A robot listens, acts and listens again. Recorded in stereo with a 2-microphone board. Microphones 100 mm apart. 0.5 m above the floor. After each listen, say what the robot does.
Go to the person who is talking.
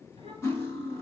Keep listening.
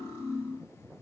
Keep listening.
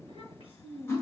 Turn 75° left.
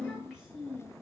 Drive 1.0 m forward.
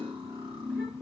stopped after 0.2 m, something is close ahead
Keep listening.
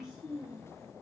Blocked. The child speaking is further on, straight ahead.